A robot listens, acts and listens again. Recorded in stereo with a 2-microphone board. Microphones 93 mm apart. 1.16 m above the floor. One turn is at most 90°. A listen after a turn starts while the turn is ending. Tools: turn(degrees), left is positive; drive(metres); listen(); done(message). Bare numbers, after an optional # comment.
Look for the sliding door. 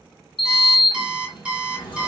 # The sliding door: about 55° left or 125° left.
turn(55)
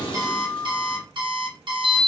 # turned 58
# So it is at 65° left.
turn(65)
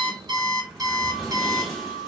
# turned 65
done("Facing the sliding door.")